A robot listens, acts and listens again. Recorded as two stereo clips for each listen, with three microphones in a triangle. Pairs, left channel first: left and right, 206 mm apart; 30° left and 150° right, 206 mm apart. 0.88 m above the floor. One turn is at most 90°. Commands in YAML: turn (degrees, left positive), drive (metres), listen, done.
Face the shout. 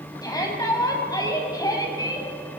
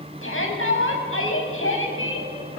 turn: 20
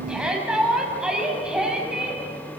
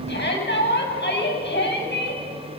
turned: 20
done: "Found it: a shout, straight ahead."